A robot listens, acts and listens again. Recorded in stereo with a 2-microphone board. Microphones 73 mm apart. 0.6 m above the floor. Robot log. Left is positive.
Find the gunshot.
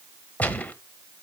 note: The gunshot: about 20° left or 160° left.
cmd yaw +20
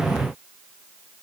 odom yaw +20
cmd idle
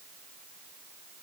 end: I heard a gunshot, but can't make it out now. It was about straight ahead or 140° left.